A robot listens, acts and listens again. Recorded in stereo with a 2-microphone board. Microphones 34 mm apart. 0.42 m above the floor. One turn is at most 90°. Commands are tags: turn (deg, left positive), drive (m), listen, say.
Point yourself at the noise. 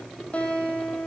<turn deg="40"/>
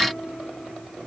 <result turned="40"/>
<listen/>
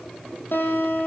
<turn deg="90"/>
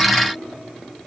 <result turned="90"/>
<turn deg="10"/>
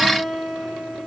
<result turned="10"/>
<say>Facing the guitar.</say>